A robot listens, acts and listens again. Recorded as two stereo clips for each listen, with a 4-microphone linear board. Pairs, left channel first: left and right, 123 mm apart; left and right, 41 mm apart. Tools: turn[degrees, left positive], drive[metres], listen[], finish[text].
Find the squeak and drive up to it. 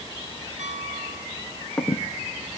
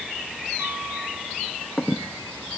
Action: turn[30]
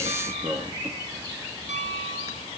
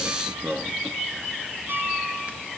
Thought: So it is at 25° right.
Action: turn[-25]
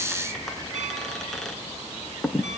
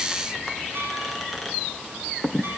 Action: drive[1.0]
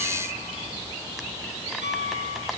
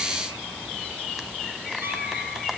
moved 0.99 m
Action: listen[]
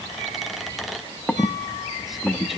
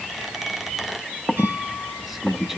Action: drive[1.0]
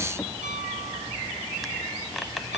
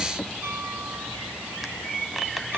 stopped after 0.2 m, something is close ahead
Action: finish[Arrived at the squeak, straight ahead.]